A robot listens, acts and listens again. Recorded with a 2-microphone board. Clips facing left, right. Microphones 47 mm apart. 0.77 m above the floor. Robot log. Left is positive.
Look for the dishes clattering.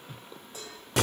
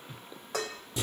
cmd yaw -90
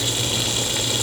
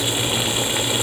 cmd idle
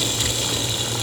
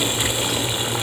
cmd idle
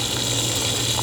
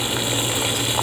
end: I heard dishes clattering from this way, but can't make it out now.